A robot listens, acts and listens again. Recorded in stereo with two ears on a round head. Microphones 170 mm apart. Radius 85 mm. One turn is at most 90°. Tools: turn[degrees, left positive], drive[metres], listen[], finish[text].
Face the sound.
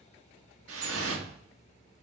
Thought: The dripping: about 75° right or 105° right.
Action: turn[-75]
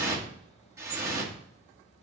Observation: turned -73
Thought: So it is at 15° right.
Action: turn[-15]
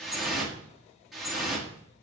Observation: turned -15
Action: finish[Facing the dripping.]